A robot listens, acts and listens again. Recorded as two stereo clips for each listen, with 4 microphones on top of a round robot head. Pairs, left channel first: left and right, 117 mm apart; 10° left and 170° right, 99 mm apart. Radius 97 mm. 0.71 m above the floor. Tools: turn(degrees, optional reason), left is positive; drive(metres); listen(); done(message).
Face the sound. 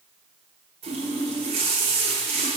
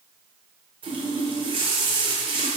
turn(degrees=-130, reason="The running tap: 130° right.")
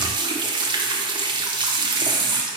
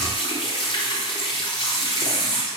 turn(degrees=-40, reason="The running tap is now 40° right.")
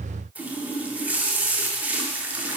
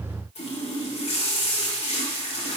turn(degrees=-10, reason="The running tap is now 10° right.")
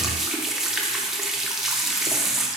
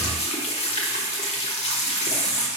done("Found it: a running tap, straight ahead.")